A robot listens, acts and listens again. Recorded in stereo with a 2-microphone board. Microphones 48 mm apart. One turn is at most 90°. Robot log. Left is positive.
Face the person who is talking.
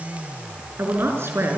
note: The woman speaking: about 55° right or 125° right.
cmd yaw -55
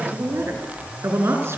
note: So it is at 70° right.
cmd yaw -70
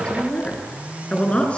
note: The woman speaking is now 25° left.
cmd yaw +25
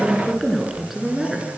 end: Found it: a woman speaking, straight ahead, over 4 m away.